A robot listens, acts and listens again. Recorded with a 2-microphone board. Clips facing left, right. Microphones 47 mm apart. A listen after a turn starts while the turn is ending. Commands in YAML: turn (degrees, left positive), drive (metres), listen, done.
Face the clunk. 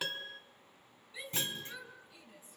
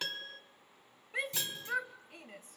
turn: 35
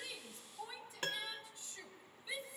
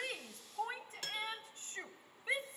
listen: true
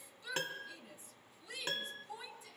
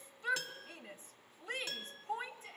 done: "I heard a clunk, but can't make it out now. It was about straight ahead or 110° left."